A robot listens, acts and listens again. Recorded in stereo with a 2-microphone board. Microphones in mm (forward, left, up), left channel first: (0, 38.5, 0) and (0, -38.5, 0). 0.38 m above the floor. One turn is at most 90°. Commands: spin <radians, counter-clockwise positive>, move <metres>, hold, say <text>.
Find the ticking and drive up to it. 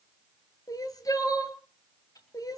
spin 1.05
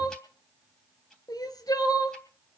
hold
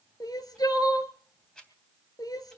spin 0.17
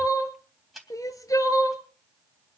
move 1.0
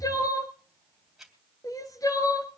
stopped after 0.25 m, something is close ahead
say Blocked. The ticking is further on, straight ahead.